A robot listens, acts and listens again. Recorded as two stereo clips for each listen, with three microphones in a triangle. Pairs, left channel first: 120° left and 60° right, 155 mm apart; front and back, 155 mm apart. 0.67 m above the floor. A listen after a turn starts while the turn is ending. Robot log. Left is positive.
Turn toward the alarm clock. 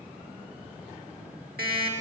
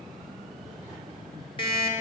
note: The alarm clock: 55° right.
cmd yaw -55
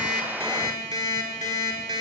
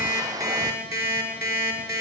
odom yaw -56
end: Found it: an alarm clock, straight ahead.